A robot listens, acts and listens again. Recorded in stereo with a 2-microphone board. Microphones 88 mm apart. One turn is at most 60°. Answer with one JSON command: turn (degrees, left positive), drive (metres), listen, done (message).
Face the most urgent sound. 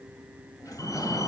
{"turn": 40}
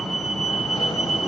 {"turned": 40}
{"done": "Facing the fire alarm, over 4 m away."}